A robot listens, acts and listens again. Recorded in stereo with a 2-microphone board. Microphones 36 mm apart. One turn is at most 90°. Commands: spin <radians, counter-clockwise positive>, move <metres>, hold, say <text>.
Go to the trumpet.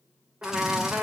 spin -0.87
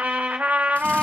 spin -1.31
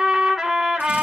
spin -0.17
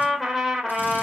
move 1.0
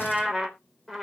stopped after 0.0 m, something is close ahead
say Something is in my way. I am facing the trumpet but have not reached it.